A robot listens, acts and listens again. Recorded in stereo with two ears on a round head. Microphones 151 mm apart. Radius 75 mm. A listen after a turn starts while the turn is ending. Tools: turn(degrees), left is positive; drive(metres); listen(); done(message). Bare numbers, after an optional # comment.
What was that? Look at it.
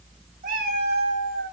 # The cat meowing: about 65° right or 115° right.
turn(-65)
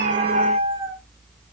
# So it is at 35° right.
turn(-35)
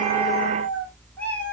# The cat meowing is now 10° left.
turn(10)
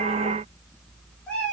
done("Facing the cat meowing, over 4 m away.")